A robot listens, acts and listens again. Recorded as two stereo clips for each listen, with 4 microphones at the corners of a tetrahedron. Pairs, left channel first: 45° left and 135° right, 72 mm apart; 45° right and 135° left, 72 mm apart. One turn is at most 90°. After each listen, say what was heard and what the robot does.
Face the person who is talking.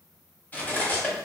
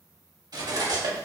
Keep listening.
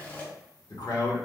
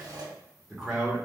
The man speaking: 40° left. Turn 40° left.
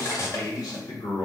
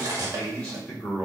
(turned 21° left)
The man speaking is now 20° left. Turn 20° left.
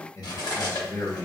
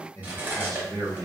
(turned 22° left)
Facing the man speaking.